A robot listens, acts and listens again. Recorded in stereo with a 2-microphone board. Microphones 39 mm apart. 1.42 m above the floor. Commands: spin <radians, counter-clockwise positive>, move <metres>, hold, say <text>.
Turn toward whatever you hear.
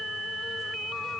hold
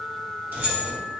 spin -0.96
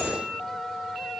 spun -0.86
hold
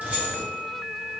spin -0.79
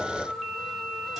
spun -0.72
hold
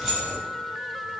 say Facing the keys jangling.